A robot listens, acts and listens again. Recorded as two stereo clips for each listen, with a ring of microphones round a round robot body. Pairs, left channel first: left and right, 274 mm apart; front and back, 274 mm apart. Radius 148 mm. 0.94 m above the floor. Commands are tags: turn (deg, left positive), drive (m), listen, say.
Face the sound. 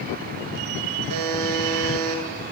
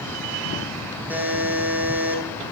<turn deg="-95"/>
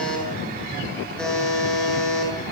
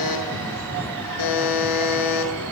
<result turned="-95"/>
<say>Facing the buzzer.</say>